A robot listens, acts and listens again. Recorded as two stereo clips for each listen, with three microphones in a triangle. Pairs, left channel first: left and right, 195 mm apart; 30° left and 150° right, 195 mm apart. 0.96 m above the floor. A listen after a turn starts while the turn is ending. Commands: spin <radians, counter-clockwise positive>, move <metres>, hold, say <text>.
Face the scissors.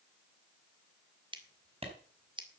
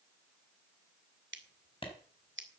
spin -2.71
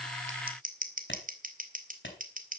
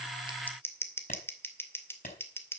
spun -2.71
spin -0.79
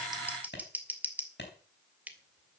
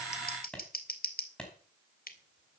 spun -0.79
spin -0.17
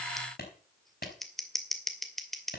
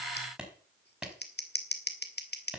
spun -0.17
say Facing the scissors, 2 to 4 m away.